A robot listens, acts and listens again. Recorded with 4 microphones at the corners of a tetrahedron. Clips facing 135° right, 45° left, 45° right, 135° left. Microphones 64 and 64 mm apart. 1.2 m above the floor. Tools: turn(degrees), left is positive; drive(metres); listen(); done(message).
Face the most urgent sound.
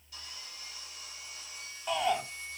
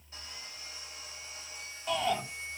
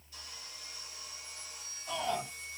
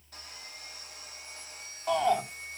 turn(degrees=140)
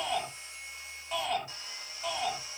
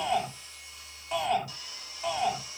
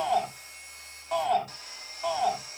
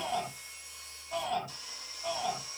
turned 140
turn(degrees=-40)
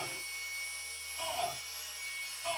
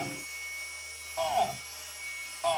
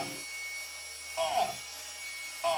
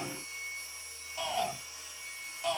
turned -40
turn(degrees=10)
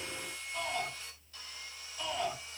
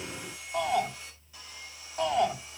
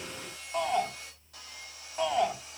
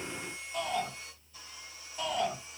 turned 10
done("Facing the shout, over 4 m away.")